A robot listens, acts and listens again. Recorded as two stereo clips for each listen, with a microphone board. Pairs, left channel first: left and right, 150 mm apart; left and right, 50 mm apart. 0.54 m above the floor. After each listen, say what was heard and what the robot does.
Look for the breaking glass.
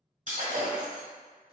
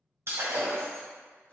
The breaking glass: about 60° right or 120° right. Turn 60° right.
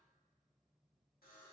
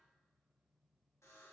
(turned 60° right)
Keep listening.
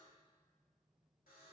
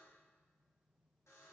I heard breaking glass, but can't make it out now. It was about straight ahead or 60° right.